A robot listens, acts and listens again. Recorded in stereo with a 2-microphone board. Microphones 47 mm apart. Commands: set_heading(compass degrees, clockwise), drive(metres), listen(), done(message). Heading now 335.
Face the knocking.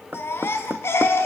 set_heading(25)
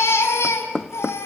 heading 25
done("Facing the knocking.")